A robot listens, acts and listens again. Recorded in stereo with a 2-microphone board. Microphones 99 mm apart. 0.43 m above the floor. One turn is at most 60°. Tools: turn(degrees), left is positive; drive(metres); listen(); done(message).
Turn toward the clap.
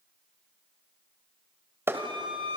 turn(degrees=-25)
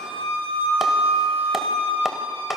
listen()
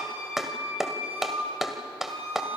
done("Found it: a clap, straight ahead, 1 to 2 m away.")